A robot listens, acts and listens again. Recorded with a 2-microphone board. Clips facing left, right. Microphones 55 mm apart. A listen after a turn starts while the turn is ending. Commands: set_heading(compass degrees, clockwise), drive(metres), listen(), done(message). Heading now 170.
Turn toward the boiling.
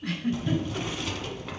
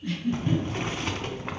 set_heading(210)
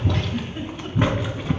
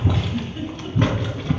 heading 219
set_heading(209)
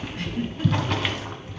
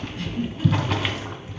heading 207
done("Found it: boiling, straight ahead, under 1 m away.")